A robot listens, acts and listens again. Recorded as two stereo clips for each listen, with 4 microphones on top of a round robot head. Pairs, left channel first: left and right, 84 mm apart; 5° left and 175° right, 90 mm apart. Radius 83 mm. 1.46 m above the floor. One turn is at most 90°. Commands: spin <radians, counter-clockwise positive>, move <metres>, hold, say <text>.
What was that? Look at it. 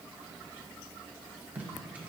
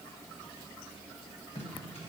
spin -0.35
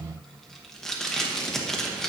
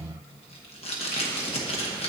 say Facing the tape being pulled, 1 to 2 m away.